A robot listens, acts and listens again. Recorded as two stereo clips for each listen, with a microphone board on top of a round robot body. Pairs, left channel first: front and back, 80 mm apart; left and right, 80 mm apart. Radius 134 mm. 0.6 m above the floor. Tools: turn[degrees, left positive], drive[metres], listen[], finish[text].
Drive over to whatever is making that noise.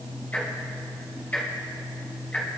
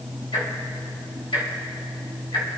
Thought: The ticking: 70° left.
Action: turn[70]
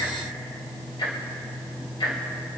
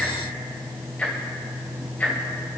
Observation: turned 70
Thought: The ticking is now 15° left.
Action: turn[15]
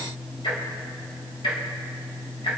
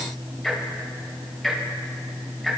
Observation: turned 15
Action: drive[1.0]
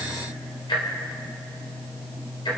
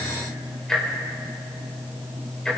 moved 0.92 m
Action: drive[1.0]
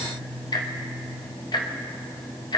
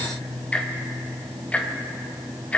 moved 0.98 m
Thought: The ticking is now 15° left.
Action: turn[15]
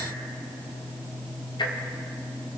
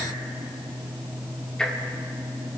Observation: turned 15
Action: drive[1.0]
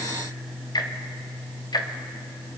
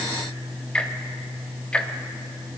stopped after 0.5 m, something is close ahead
Thought: The ticking is now 15° left.
Action: turn[15]
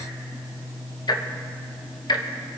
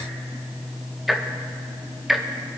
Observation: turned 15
Action: finish[Arrived at the ticking, straight ahead.]